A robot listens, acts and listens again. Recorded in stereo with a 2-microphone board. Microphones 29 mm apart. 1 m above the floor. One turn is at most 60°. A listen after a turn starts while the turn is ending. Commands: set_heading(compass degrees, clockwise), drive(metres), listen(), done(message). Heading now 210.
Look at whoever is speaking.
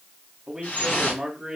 set_heading(240)
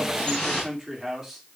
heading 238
set_heading(268)
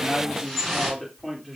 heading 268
done("Found it: a man speaking, straight ahead.")